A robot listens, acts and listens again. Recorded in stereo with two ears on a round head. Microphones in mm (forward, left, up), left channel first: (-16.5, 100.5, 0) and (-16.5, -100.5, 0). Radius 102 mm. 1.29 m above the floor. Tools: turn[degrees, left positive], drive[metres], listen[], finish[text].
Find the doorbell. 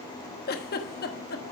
Action: listen[]
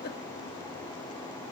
Action: listen[]
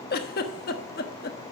Action: finish[I can't make out a doorbell to turn to.]